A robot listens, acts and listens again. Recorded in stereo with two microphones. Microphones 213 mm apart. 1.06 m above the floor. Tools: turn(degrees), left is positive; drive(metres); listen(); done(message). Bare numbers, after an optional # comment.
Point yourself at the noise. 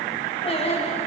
# The singing: about 30° left or 150° left.
turn(30)
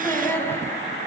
# So it is at 10° left.
turn(10)
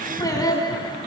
# The singing is now 20° left.
turn(20)
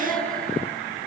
done("Facing the singing, 2 to 4 m away.")